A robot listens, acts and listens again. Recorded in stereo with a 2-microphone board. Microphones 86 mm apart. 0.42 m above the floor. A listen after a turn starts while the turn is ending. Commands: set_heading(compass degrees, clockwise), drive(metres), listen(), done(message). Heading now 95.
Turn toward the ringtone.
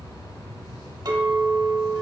listen()
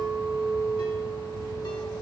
listen()
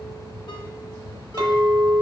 done("I can't make out a ringtone to turn to.")